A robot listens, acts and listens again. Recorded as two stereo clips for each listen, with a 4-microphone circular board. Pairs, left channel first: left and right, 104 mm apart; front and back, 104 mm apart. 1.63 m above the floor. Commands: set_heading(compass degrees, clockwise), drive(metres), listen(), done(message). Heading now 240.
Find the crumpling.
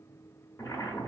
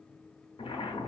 listen()
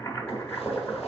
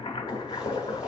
listen()
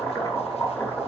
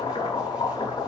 done("I can't make out crumpling to turn to.")